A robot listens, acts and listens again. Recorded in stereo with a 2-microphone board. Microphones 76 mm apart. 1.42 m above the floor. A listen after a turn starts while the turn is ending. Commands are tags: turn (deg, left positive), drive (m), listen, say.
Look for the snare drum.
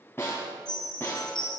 <turn deg="30"/>
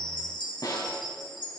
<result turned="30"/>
<turn deg="120"/>
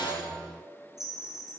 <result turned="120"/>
<listen/>
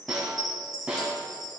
<turn deg="-15"/>
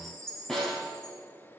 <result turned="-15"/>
<say>Facing the snare drum, 2 to 4 m away.</say>